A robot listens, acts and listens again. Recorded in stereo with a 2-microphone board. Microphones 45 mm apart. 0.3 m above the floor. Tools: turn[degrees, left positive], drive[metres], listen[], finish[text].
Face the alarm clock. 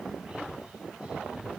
Action: listen[]
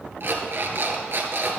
Thought: The alarm clock: about 55° right or 125° right.
Action: turn[-55]
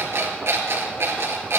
Thought: So it is at 70° right.
Action: turn[-70]
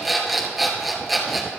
Action: finish[Found it: an alarm clock, straight ahead.]